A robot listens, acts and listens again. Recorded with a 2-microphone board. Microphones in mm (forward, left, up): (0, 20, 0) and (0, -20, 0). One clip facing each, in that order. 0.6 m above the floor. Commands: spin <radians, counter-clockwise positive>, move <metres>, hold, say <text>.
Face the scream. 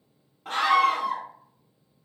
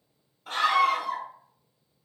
spin 0.96
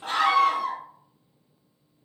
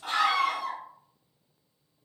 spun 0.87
spin 0.96
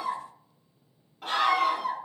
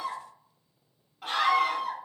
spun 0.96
say Facing the scream, 1 to 2 m away.